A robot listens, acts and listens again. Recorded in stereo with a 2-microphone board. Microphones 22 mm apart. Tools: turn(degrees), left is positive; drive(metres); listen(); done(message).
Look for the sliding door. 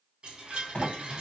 turn(degrees=70)
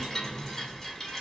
listen()
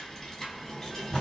turn(degrees=25)
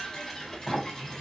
turn(degrees=20)
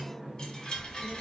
done("Found it: a sliding door, straight ahead, 1 to 2 m away.")